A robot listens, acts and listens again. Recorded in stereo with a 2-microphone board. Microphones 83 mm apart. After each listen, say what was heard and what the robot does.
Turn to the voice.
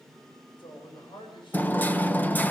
Turn 90° left.
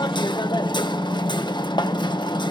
Keep listening.
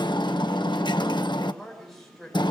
Found it: a man speaking, straight ahead.